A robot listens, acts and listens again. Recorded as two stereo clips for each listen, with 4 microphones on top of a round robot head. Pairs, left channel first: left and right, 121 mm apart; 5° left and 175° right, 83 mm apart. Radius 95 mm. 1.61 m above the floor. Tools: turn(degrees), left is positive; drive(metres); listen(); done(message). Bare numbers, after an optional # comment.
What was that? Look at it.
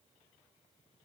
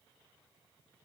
listen()
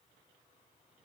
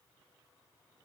listen()
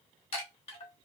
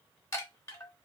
# The chime: 55° left.
turn(55)
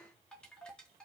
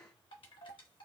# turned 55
# The chime is now 10° left.
turn(10)
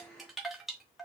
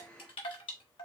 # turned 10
done("Found it: a chime, straight ahead.")